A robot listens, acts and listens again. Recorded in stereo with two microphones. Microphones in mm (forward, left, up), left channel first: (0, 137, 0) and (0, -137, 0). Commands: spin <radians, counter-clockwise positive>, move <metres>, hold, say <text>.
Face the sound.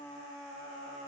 hold
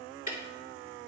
spin 0.52
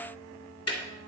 spin 2.09
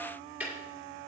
say Found it: ticking, straight ahead, 2 to 4 m away.